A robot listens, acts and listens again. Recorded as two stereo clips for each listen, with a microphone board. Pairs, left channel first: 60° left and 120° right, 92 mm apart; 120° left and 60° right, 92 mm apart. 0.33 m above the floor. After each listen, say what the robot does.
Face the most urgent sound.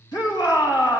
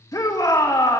Turn 80° left.
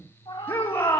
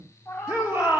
Facing the shout, 2 to 4 m away.